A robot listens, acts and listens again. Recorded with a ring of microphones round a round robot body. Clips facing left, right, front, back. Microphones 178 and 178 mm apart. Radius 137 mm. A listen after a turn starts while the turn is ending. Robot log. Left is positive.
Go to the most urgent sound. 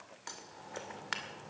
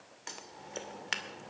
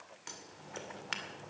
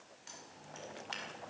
cmd idle
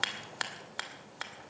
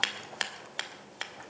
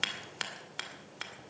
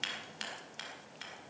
cmd idle
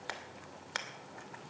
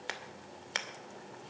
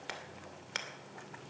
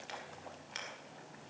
end: I can't make out anything urgent, only scissors.